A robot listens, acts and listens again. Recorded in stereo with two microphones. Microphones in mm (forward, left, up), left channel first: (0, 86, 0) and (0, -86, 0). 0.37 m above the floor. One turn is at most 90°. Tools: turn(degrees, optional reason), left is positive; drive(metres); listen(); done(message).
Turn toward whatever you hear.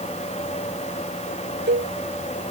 turn(degrees=-90)
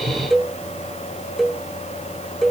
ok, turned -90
done("Found it: a cowbell, straight ahead.")